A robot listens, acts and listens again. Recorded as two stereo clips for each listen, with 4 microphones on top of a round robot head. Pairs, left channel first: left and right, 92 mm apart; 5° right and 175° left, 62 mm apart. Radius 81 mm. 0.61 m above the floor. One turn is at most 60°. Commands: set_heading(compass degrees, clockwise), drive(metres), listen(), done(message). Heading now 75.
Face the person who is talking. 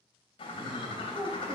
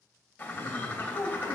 set_heading(105)
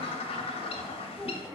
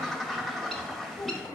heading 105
done("Found it: a child speaking, straight ahead, 1 to 2 m away.")